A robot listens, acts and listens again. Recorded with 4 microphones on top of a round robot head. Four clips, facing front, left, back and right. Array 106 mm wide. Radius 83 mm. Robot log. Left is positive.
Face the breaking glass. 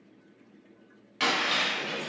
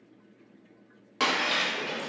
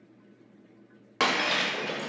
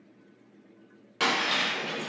note: The breaking glass: 170° left.
cmd yaw +170
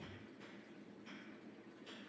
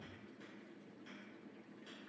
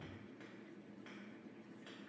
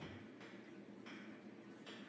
end: Facing where the breaking glass came from. I can't hear it now.